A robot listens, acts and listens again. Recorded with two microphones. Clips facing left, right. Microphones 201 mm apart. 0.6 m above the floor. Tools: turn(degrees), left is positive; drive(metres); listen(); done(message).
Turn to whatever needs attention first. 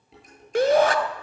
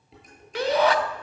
turn(degrees=45)
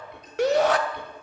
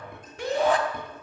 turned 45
turn(degrees=85)
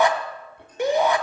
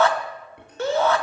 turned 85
turn(degrees=15)
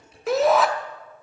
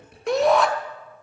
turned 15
done("Facing the shout.")